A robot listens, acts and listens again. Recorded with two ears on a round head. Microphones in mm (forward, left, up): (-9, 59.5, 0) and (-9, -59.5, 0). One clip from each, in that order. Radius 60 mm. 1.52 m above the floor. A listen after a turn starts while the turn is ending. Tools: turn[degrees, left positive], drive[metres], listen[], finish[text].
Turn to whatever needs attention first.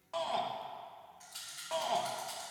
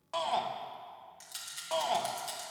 Thought: The shout: about 25° right or 155° right.
Action: turn[-25]
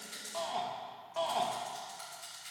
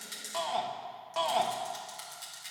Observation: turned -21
Thought: So it is at 135° right.
Action: turn[-135]
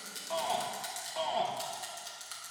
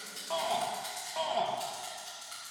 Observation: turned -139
Action: finish[Facing the shout.]